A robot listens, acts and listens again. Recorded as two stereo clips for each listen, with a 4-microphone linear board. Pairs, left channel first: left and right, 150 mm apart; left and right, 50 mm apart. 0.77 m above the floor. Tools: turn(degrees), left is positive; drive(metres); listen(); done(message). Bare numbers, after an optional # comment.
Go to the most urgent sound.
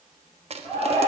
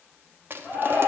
# The shout: about 55° left or 125° left.
turn(55)
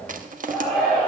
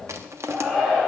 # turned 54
drive(1.0)
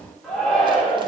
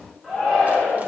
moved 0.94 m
drive(1.0)
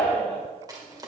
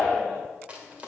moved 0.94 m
# The shout is now 10° left.
turn(10)
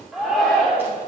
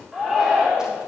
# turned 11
drive(1.0)
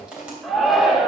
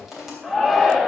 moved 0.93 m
drive(1.0)
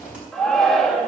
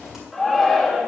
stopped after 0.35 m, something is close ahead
done("I am next to the shout.")